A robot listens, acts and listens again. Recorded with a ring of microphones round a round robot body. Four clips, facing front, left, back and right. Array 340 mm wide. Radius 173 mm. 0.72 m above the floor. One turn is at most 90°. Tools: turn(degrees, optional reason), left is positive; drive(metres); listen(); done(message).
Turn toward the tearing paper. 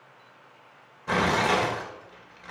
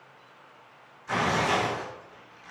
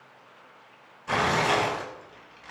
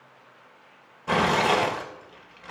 turn(degrees=-70, reason="The tearing paper: 70° right.")
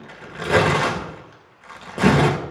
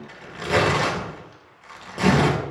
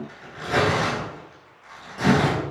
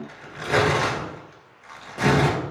turn(degrees=10, reason="The tearing paper is now 10° left.")
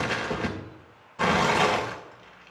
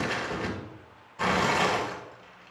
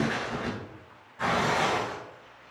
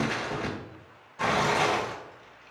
done("Found it: tearing paper, straight ahead.")